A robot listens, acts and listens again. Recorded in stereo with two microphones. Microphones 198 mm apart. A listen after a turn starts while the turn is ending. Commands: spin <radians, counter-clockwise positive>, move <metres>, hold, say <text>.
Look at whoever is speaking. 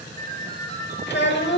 spin 1.13
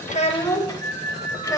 spin 0.35
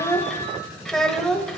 say Found it: a child speaking, straight ahead.